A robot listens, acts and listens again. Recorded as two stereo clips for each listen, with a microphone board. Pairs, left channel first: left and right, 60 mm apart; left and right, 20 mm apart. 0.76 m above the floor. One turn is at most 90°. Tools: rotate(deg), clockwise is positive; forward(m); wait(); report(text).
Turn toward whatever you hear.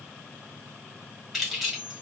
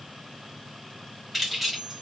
rotate(-30)
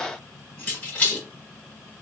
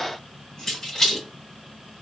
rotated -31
rotate(-90)
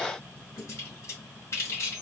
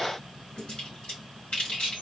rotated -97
rotate(-50)
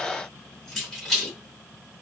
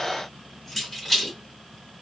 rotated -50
report("Facing the keys jangling, 1 to 2 m away.")